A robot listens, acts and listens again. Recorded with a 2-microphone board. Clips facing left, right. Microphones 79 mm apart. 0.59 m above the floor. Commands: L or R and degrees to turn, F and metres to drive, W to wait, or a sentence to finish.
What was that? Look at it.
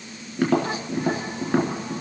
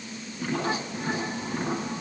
L90
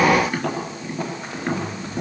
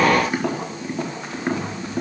R10
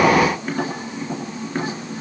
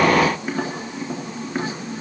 Found it: tapping, straight ahead, over 4 m away.